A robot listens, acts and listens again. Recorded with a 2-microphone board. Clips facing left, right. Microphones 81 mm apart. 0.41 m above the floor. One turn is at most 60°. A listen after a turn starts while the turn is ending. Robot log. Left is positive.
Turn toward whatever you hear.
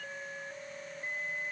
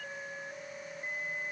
cmd idle
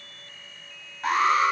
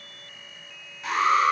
note: The alarm: about 50° left or 130° left.
cmd yaw +50
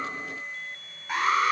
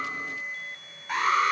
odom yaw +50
end: Facing the alarm.